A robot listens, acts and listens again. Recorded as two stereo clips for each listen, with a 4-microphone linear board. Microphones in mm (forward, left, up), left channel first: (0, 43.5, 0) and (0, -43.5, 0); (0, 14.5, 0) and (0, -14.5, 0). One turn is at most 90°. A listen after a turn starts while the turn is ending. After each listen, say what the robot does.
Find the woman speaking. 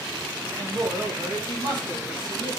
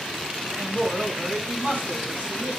Turn 60° right.
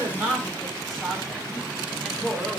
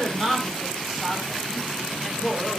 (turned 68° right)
Found it: a woman speaking, straight ahead.